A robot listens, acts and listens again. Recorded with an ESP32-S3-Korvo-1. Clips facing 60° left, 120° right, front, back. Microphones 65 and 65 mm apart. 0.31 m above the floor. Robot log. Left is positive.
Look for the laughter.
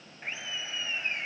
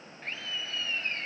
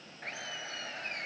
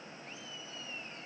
note: The laughter: 15° right.
cmd yaw -15
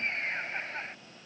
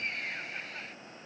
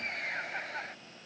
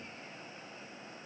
end: Facing the laughter.